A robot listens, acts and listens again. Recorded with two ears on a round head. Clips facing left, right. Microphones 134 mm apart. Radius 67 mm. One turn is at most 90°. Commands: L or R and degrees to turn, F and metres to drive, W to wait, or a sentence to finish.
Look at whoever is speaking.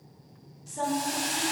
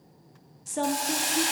R60
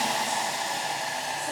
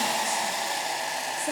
W
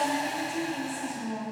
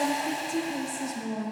R50
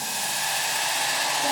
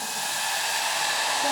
W
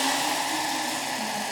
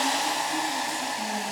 W
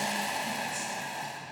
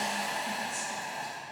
Facing where the woman speaking came from. I can't hear it now.